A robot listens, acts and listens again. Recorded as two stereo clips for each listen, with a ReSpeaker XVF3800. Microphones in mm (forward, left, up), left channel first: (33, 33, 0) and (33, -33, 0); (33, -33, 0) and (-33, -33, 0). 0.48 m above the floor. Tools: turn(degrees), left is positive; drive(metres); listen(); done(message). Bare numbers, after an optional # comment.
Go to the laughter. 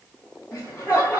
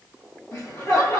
# The laughter: 30° left.
turn(30)
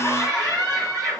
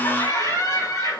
drive(1.0)
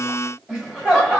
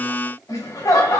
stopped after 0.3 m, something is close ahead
# The laughter is now 10° right.
turn(-10)
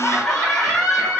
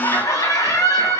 done("Something is in my way. I am facing the laughter but have not reached it.")